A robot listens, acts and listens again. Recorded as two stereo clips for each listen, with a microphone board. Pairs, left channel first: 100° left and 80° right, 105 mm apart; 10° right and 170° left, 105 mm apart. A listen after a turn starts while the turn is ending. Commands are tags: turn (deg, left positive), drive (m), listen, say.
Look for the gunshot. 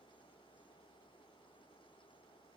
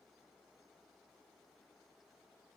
<listen/>
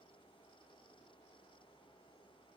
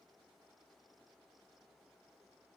<listen/>
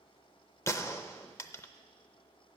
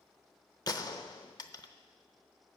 <turn deg="35"/>
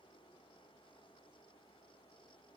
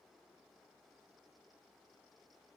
<say>Facing where the gunshot came from. I can't hear it now.</say>